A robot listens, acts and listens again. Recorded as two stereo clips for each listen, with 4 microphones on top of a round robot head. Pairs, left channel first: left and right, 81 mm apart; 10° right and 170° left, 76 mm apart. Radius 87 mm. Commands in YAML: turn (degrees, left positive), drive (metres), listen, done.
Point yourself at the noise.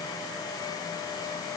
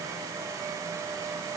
listen: true
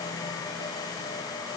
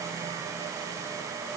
listen: true
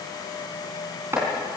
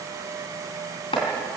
turn: -25
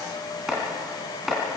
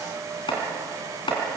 done: "Found it: chopping, straight ahead."